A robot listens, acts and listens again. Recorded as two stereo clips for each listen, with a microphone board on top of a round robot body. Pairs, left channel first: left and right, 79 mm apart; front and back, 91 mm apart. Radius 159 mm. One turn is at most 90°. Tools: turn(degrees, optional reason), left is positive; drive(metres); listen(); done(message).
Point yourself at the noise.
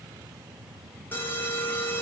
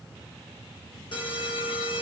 turn(degrees=30, reason="The alarm: 30° left.")
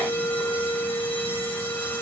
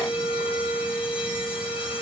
turn(degrees=25, reason="The alarm is now 25° left.")
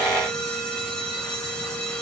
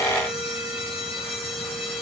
turn(degrees=10, reason="The alarm is now 10° left.")
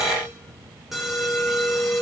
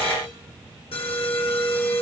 done("Facing the alarm.")